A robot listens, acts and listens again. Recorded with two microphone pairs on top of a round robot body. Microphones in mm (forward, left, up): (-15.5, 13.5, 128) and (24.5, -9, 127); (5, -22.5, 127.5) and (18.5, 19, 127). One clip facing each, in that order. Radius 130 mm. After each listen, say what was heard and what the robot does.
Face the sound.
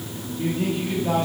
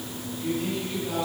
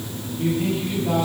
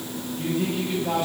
The man speaking: 115° left. Turn 115° left.
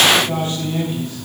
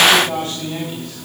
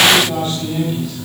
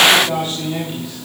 Facing the man speaking, over 4 m away.